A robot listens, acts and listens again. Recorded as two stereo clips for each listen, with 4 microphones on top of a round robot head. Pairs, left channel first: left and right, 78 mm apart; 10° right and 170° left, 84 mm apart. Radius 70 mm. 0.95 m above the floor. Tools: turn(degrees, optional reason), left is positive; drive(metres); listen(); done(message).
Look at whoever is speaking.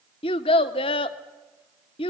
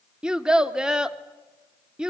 turn(degrees=90, reason="The child speaking: 90° left.")
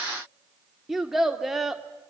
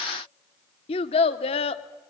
done("Facing the child speaking.")